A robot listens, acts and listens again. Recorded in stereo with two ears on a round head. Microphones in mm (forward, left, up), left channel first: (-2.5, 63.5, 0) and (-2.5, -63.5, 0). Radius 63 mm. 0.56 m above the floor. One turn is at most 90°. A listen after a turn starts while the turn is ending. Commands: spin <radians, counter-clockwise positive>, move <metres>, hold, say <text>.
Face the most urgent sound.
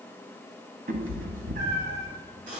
hold
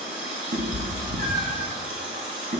hold
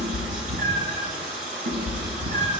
say I can't make out anything urgent to turn to.